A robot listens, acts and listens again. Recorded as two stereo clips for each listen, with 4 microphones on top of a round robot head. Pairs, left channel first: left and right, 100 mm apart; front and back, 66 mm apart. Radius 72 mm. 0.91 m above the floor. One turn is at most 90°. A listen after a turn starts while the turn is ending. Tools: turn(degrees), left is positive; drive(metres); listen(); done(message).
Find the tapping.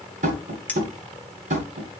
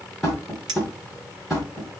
turn(degrees=-90)
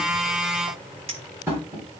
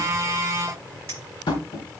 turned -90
turn(degrees=-15)
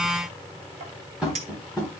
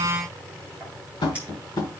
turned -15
done("Found it: tapping, straight ahead, 1 to 2 m away.")